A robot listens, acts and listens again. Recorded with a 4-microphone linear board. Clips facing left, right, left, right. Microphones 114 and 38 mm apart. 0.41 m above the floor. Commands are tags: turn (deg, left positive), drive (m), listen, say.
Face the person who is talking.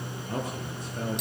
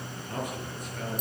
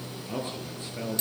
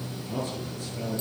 <turn deg="30"/>
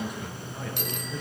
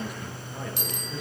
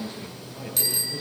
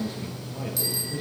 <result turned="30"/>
<say>Facing the man speaking.</say>